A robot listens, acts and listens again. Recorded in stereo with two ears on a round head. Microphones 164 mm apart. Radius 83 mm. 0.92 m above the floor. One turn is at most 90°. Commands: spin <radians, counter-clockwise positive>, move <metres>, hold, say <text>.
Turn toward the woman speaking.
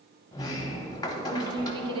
spin -0.52
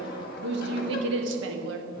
spin -1.57
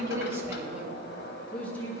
spin 0.26
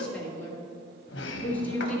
spin 0.17
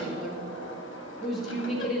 say Facing the woman speaking, 1 to 2 m away.